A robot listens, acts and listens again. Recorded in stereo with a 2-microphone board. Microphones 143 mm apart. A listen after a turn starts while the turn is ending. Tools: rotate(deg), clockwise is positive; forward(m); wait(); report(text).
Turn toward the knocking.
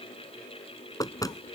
rotate(-25)
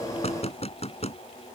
rotate(-130)
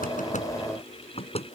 rotate(-45)
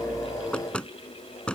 report("Facing the knocking.")